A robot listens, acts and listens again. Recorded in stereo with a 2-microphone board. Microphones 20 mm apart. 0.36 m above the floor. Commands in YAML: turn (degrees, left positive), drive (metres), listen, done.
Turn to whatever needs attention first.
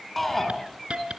turn: 30
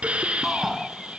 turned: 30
turn: -15
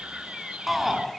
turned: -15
done: "Found it: a shout, straight ahead."